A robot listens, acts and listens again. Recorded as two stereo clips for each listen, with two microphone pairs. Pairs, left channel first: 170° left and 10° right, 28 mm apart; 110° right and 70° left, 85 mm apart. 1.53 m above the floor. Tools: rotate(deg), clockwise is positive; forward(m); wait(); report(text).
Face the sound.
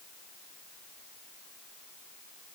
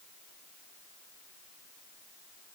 wait()
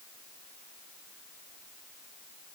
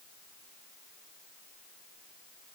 wait()
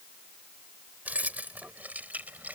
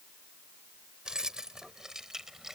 rotate(15)
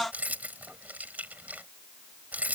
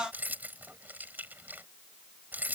report("Facing the keys jangling.")